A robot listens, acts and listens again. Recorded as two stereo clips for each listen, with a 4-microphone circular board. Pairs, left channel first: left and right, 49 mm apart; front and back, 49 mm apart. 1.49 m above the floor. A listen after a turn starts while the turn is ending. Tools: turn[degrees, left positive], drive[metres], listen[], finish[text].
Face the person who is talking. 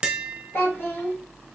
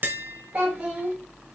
Thought: The child speaking: 120° left.
Action: turn[120]
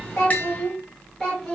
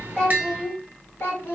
Thought: The child speaking is now 15° left.
Action: turn[15]
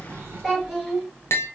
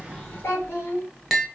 Action: finish[Found it: a child speaking, straight ahead, 1 to 2 m away.]